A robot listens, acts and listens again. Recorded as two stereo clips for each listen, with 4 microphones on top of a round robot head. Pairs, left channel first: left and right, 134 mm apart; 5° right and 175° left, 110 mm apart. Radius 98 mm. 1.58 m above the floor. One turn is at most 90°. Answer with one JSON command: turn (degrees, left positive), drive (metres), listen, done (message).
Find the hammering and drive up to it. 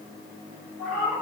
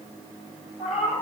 {"listen": true}
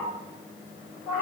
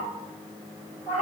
{"listen": true}
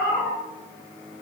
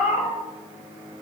{"done": "I can't make out hammering, only a cat meowing."}